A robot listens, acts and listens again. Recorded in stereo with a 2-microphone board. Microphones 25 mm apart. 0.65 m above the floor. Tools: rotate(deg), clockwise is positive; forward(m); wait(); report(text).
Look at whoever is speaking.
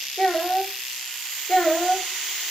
rotate(-65)
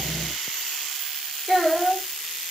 rotate(-10)
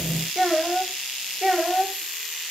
report("Found it: a child speaking, straight ahead, 1 to 2 m away.")